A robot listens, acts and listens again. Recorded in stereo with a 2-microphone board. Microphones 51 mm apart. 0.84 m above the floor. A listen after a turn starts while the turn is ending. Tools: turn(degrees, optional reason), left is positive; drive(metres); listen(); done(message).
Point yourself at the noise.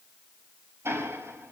turn(degrees=-55, reason="The ticking: about 55° right or 125° right.")
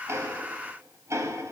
turn(degrees=-70, reason="So it is at 70° right.")
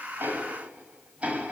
turn(degrees=-25, reason="The ticking is now 25° right.")
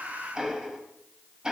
turn(degrees=-15, reason="The ticking is now 15° right.")
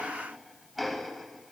done("Facing the ticking.")